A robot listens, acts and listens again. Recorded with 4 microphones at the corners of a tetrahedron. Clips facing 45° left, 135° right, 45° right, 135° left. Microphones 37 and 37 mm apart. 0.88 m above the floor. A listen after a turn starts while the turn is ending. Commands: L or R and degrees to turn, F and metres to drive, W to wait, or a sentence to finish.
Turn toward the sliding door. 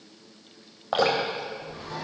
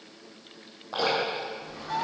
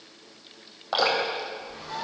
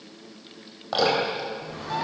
L100
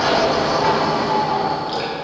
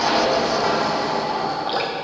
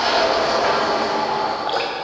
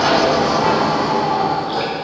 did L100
R15
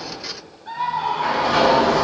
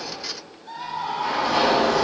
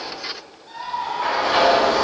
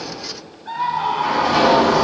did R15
Found it: a sliding door, straight ahead, over 4 m away.